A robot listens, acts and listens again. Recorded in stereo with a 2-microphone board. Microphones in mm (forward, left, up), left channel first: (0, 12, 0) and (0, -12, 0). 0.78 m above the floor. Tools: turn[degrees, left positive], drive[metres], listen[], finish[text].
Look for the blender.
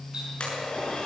Thought: The blender: about 50° left or 130° left.
Action: turn[50]
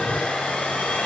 Thought: So it is at 80° left.
Action: turn[80]
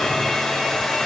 Thought: The blender is now 15° left.
Action: turn[15]
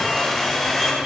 Action: finish[Facing the blender.]